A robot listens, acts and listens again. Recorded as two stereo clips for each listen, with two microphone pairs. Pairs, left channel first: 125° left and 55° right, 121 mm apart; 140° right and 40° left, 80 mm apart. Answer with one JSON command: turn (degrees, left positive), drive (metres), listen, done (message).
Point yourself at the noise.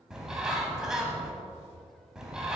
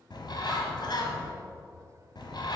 {"turn": -140}
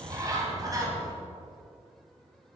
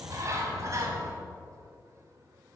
{"done": "Facing the bird."}